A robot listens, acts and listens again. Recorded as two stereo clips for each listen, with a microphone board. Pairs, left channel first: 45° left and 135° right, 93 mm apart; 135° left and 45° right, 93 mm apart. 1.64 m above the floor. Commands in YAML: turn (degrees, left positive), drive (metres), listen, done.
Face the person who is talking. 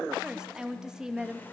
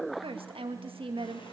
turn: -50
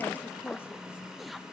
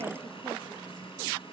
listen: true
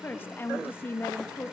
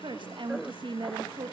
turn: -20
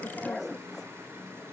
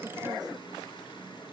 listen: true
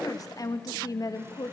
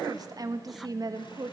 done: "Found it: a woman speaking, straight ahead."